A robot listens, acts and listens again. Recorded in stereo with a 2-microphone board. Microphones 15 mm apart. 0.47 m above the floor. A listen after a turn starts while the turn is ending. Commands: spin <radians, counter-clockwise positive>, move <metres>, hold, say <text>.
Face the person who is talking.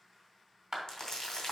hold
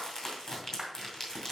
hold
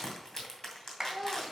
spin -0.35
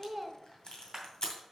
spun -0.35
hold
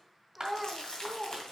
say Found it: a child speaking, straight ahead.